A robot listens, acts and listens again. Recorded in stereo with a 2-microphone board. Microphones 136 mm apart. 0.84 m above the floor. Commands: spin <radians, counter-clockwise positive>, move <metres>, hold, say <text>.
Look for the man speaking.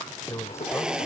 spin 0.35
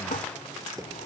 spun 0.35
hold
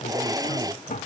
hold
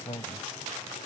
spin 0.70
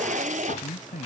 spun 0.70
spin 1.75
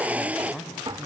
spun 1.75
say Facing the man speaking.